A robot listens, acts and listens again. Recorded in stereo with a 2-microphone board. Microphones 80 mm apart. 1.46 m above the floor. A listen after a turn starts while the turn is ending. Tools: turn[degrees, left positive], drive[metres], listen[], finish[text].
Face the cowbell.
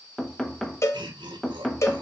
Thought: The cowbell: about 35° left or 145° left.
Action: turn[35]
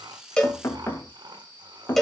Action: finish[Facing the cowbell, 1 to 2 m away.]